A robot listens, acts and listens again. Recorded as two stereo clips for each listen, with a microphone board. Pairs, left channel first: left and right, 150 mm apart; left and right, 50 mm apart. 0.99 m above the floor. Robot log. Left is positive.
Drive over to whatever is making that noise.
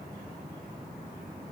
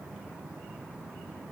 cmd idle
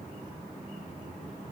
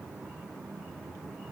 cmd idle
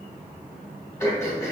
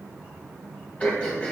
note: The throat clearing: about 20° left or 160° left.
cmd yaw +20
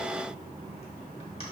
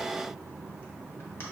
cmd idle
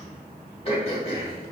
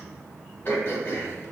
note: So it is at 140° left.
cmd yaw +140
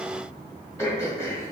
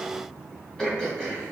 note: The throat clearing is now 15° left.
cmd yaw +15
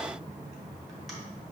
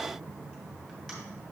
cmd idle
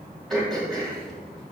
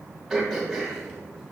cmd fwd 1.0
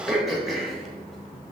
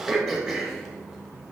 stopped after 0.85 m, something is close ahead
end: I am next to the throat clearing.